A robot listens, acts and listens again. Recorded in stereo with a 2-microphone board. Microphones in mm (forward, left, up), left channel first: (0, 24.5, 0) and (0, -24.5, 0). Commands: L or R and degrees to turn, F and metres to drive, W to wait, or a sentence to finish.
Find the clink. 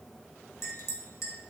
L60
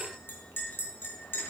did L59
L55
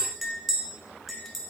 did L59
Facing the clink.